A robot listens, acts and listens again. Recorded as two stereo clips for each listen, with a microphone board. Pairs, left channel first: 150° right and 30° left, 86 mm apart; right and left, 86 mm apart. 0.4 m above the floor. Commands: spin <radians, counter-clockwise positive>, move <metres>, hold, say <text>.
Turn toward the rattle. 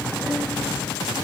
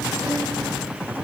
hold
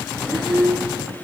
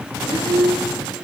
hold
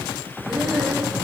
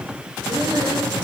say I can't make out a rattle to turn to.